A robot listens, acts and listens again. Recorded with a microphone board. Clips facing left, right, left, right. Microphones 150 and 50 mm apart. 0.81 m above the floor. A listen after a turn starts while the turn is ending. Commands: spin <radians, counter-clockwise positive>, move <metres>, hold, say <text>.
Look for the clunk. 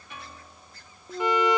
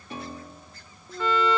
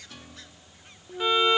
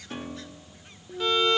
spin 0.35
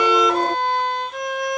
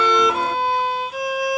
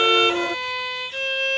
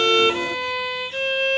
hold
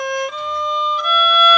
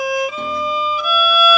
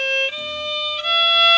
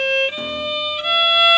say I heard a clunk, but can't make it out now. It was about straight ahead or 140° left.